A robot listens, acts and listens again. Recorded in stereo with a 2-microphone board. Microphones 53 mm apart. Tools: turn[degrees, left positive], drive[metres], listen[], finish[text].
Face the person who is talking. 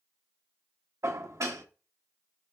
Action: listen[]
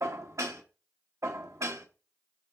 Action: listen[]
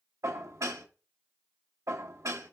Action: finish[I can't make out anyone speaking to turn to.]